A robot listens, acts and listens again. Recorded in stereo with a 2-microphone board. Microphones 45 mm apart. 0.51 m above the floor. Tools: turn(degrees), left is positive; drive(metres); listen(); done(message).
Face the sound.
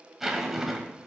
turn(degrees=-30)
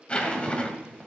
turn(degrees=25)
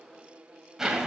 turn(degrees=-10)
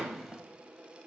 done("Found it: a zipper, straight ahead, 1 to 2 m away.")